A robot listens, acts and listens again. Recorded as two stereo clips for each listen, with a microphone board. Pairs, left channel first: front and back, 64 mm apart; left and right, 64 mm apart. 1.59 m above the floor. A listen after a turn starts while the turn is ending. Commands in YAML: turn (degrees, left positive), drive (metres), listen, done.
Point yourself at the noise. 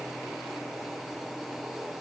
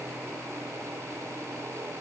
listen: true
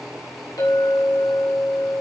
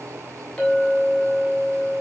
turn: 15
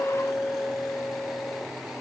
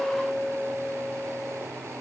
turn: 10
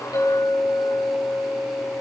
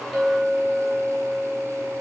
done: "Facing the clink, over 4 m away."